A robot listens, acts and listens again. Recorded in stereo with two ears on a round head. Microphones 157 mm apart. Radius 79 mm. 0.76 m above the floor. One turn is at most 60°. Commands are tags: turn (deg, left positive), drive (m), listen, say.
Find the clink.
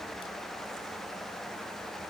<listen/>
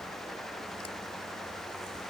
<listen/>
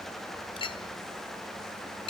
<turn deg="30"/>
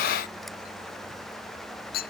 <turn deg="60"/>
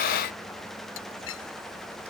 <turn deg="60"/>
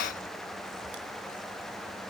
<listen/>
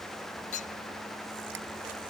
<turn deg="45"/>
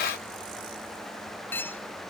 <turn deg="10"/>
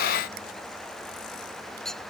<say>Facing the clink.</say>